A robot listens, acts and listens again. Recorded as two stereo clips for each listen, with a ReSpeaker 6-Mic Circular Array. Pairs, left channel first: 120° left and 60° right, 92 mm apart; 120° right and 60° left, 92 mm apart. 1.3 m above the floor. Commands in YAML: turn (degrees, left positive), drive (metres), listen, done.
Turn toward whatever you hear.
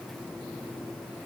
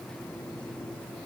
listen: true
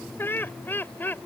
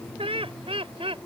turn: 50
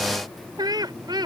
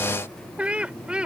turn: -20
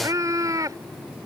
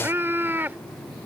turn: -10
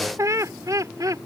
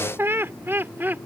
turn: -10
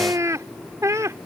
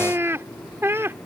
done: "Found it: laughter, straight ahead."